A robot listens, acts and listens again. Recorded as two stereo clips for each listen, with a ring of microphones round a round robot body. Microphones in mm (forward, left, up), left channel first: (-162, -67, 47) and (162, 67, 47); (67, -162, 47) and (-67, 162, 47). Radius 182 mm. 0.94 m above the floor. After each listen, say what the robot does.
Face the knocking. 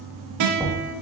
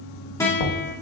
Turn 60° right.
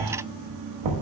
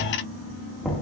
Turn 20° left.
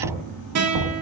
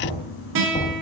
Facing the knocking.